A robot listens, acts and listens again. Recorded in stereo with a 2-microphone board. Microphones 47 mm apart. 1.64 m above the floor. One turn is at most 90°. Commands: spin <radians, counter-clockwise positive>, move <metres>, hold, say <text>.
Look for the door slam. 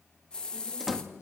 spin -0.52
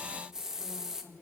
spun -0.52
hold
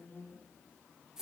say I heard a door slam, but can't make it out now. It was about 25° left or 145° right.